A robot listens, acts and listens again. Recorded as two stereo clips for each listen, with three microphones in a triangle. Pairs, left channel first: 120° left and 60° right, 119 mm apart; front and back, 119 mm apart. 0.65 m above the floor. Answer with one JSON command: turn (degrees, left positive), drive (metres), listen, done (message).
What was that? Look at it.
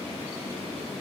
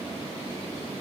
{"listen": true}
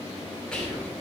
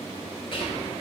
{"turn": 40}
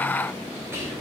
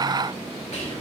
{"done": "Facing the whispering."}